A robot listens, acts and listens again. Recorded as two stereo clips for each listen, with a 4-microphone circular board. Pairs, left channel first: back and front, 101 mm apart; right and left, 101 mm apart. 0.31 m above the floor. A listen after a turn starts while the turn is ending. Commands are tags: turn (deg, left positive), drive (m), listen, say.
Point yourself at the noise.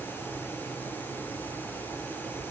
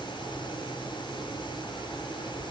<listen/>
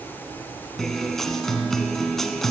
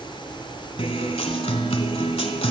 <turn deg="-95"/>
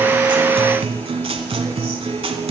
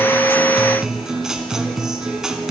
<say>Facing the guitar.</say>